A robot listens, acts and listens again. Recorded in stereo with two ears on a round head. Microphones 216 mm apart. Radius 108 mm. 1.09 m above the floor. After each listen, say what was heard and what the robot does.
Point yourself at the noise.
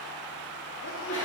The sneeze: about 55° left or 125° left. Turn 55° left.
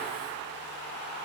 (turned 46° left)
Keep listening.
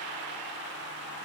I heard a sneeze, but can't make it out now. It was about 5° left or 80° left.